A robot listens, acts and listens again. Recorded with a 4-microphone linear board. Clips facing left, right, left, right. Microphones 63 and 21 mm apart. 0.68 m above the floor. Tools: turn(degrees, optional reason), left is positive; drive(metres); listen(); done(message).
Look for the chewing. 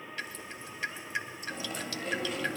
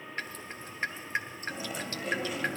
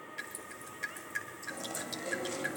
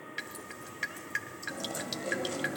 turn(degrees=-30)
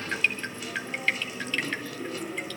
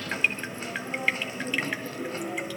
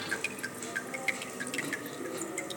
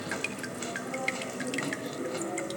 turn(degrees=-145, reason="So it is at 145° right.")
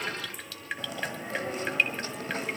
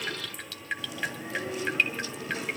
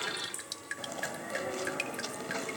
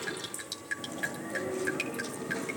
turn(degrees=45, reason="The chewing is now 45° left.")
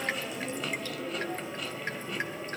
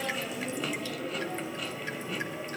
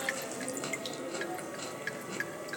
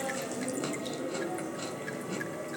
done("Facing the chewing.")